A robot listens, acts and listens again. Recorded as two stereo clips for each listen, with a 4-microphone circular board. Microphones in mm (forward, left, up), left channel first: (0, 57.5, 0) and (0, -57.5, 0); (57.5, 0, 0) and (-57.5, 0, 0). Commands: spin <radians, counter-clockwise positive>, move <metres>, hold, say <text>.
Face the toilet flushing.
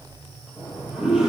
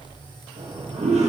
spin -2.97
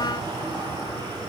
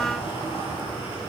spin -0.70
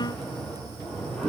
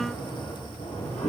spin 0.17
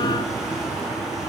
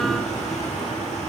say Found it: a toilet flushing, straight ahead.